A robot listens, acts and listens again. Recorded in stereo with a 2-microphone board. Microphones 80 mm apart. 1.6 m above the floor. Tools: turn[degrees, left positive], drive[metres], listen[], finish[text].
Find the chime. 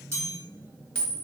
Thought: The chime: about 35° right or 145° right.
Action: turn[-35]
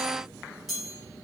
Action: finish[Facing the chime.]